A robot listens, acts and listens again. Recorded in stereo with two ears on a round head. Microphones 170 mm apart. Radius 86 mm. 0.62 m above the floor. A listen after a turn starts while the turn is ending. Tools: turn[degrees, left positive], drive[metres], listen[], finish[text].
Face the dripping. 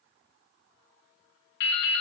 Thought: The dripping: about 60° left or 120° left.
Action: turn[60]
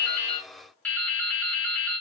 Thought: So it is at 10° left.
Action: turn[10]
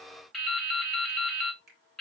Action: finish[Found it: dripping, straight ahead, 1 to 2 m away.]